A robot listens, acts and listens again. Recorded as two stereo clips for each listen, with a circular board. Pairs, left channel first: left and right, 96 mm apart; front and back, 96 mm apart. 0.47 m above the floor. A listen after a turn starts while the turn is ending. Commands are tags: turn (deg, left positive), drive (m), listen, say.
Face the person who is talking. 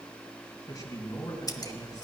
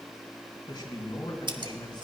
<turn deg="40"/>
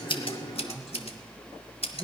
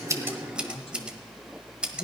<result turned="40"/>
<say>Facing the man speaking.</say>